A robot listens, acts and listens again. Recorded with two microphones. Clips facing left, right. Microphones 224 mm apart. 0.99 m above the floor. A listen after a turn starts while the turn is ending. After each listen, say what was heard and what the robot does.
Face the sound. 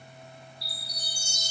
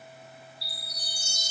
Turn 30° right.
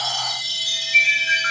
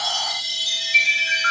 So it is at 25° left. Turn 25° left.
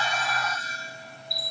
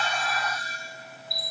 Found it: a chime, straight ahead.